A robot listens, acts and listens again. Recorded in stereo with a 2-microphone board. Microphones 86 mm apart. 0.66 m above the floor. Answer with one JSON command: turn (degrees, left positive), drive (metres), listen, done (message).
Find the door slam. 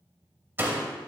{"turn": -25}
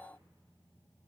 {"listen": true}
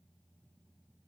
{"done": "I heard a door slam, but can't make it out now. It was about straight ahead or 130° right."}